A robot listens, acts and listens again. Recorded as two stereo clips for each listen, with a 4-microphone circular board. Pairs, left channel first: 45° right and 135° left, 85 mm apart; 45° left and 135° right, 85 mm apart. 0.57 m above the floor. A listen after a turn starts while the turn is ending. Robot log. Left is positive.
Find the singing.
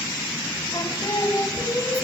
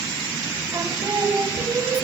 note: The singing: 95° right.
cmd yaw -95
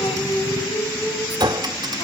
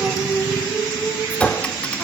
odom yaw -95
note: The singing is now 30° right.
cmd yaw -30
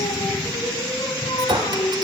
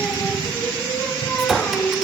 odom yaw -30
note: The singing is now 30° right.
cmd yaw -30
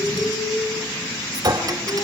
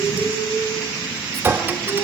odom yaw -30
note: The singing is now 10° right.
cmd yaw -10
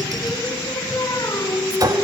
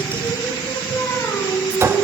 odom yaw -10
end: Found it: singing, straight ahead, 2 to 4 m away.